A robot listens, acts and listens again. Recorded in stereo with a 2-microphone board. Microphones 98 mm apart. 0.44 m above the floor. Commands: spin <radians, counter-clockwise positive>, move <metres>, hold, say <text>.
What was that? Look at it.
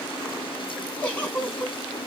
spin 0.26
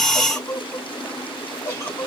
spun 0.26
spin 2.62
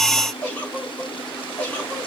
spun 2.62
spin 0.26
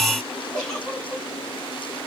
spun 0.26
say Facing the giggle, 2 to 4 m away.